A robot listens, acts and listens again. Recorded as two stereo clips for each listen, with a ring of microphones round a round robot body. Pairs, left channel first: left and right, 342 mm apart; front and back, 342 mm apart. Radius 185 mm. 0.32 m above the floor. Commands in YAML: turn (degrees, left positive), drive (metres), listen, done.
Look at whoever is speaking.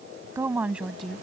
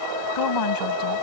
done: "Found it: a woman speaking, straight ahead."